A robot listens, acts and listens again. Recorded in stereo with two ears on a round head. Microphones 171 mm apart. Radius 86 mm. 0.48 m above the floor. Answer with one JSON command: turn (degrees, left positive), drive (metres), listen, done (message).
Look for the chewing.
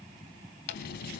{"turn": 65}
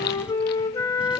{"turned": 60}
{"listen": true}
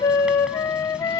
{"listen": true}
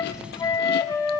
{"done": "I heard chewing, but can't make it out now. It was about 5° left or 55° left."}